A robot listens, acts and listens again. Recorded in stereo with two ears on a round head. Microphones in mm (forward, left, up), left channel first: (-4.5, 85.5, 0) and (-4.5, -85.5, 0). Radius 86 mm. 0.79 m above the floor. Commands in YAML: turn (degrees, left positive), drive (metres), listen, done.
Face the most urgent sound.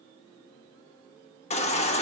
turn: 35
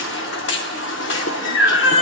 turn: 105
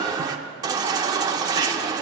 turn: -20
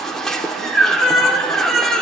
done: "Facing the baby crying."